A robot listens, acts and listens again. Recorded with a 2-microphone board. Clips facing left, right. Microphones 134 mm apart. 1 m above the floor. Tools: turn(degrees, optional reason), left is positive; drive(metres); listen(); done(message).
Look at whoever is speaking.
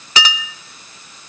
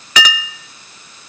listen()
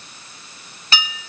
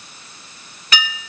listen()
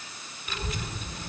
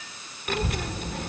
turn(degrees=-65, reason="The child speaking: about 65° right or 115° right.")
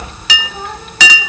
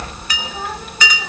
done("Facing the child speaking.")